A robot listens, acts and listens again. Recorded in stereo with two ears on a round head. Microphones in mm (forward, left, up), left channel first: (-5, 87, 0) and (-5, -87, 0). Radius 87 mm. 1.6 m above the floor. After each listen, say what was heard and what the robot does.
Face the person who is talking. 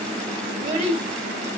The child speaking: about 35° right or 145° right. Turn 35° right.
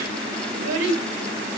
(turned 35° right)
So it is at 105° right. Turn 105° right.
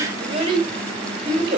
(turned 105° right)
The child speaking is now 30° right. Turn 30° right.
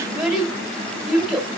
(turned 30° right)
Facing the child speaking, 2 to 4 m away.